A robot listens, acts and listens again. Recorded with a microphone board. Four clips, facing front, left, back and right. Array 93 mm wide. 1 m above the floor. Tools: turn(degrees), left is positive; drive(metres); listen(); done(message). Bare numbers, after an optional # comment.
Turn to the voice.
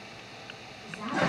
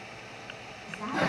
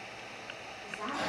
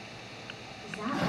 # The woman speaking: 105° right.
turn(-105)
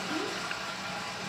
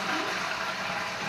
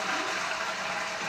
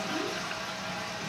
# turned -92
# Nothing new. It was at 15° right.
turn(-15)
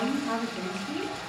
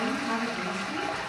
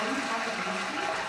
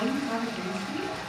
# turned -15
done("Found it: a woman speaking, straight ahead, 2 to 4 m away.")